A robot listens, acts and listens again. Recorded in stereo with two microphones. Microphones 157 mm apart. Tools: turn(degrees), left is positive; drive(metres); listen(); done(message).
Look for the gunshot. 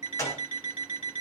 turn(degrees=20)
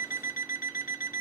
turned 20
listen()
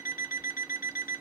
done("I heard a gunshot, but can't make it out now. It was about straight ahead or 140° left.")